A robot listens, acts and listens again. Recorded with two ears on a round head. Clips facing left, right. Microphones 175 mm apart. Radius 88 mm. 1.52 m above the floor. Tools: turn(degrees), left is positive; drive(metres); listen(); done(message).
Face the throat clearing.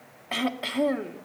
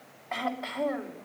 turn(degrees=40)
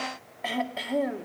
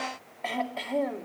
done("Found it: throat clearing, straight ahead.")